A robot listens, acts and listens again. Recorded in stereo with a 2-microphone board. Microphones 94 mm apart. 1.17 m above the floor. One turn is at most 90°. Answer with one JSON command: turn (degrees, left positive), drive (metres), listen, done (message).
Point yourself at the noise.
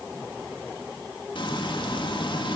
{"turn": 60}
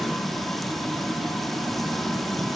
{"done": "Facing the frying."}